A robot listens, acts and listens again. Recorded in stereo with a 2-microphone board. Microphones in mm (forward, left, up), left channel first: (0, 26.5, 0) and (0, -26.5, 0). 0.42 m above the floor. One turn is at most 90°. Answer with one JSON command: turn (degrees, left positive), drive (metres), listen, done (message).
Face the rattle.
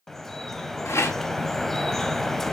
{"turn": 70}
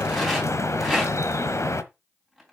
{"done": "Found it: a rattle, straight ahead."}